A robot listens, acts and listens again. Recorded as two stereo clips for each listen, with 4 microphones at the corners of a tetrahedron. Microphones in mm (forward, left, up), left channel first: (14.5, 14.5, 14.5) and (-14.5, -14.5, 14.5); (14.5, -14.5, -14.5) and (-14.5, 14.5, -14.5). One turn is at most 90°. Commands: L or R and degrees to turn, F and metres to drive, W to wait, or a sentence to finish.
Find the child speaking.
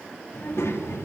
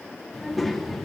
L45
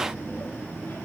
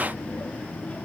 L15
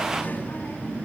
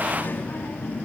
Found it: a child speaking, straight ahead.